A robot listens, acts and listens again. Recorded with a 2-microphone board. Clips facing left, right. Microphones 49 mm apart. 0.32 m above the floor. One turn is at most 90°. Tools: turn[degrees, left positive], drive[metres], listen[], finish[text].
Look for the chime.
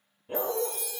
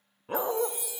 Thought: The chime: about 15° right or 165° right.
Action: turn[-15]
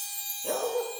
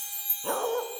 Thought: So it is at 155° right.
Action: turn[-90]
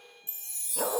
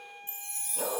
Thought: The chime is now 45° right.
Action: turn[-45]
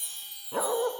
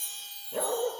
Thought: The chime is now 10° left.
Action: turn[10]
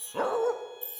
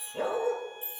Action: finish[Facing the chime.]